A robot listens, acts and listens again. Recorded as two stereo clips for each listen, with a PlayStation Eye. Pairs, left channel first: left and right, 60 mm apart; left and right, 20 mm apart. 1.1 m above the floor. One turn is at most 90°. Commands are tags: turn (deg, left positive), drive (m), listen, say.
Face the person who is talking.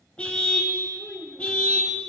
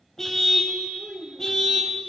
<turn deg="-30"/>
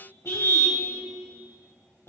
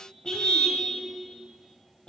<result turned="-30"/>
<listen/>
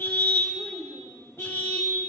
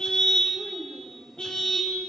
<turn deg="15"/>
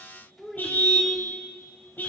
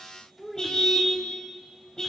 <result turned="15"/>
<say>Facing the child speaking.</say>